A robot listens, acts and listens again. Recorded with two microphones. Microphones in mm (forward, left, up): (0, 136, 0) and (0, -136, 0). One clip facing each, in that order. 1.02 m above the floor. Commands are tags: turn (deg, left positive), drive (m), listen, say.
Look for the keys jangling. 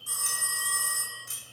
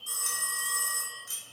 <turn deg="30"/>
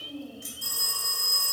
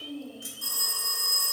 <turn deg="-10"/>
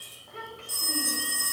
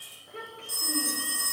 <listen/>
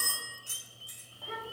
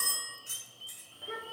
<turn deg="-25"/>
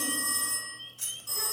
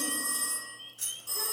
<turn deg="-10"/>
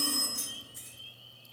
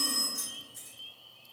<say>Found it: keys jangling, straight ahead, 2 to 4 m away.</say>